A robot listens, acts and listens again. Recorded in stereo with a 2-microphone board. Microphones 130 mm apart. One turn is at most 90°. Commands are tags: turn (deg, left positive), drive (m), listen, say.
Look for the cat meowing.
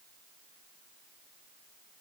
<listen/>
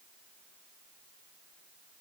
<listen/>
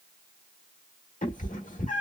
<turn deg="75"/>
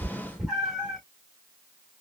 <say>Facing the cat meowing, 1 to 2 m away.</say>